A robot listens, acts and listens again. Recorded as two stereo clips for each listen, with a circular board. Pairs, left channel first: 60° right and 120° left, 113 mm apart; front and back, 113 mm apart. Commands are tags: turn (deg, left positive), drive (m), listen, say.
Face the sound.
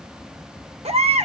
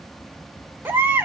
<turn deg="110"/>
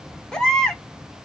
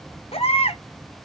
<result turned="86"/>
<turn deg="20"/>
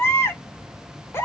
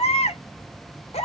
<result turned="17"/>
<say>Facing the baby crying, 1 to 2 m away.</say>